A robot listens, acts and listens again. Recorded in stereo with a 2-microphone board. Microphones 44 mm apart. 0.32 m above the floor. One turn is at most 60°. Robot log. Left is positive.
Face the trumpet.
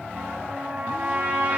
note: The trumpet: about 35° right or 145° right.
cmd yaw -35
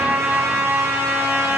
note: So it is at 110° right.
cmd yaw -60
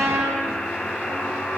note: The trumpet is now 80° right.
cmd yaw -60
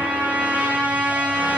note: The trumpet is now 30° right.
cmd yaw -30
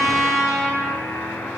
end: Found it: a trumpet, straight ahead, over 4 m away.